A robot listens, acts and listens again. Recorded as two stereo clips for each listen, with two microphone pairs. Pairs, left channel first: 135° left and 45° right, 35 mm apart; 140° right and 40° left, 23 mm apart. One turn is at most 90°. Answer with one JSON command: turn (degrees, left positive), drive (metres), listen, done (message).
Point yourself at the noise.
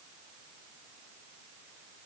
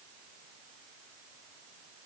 {"listen": true}
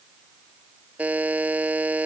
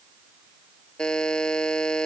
{"turn": -85}
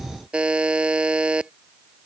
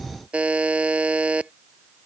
{"turn": 15}
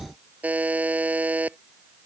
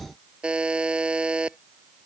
{"done": "Found it: a buzzer, straight ahead."}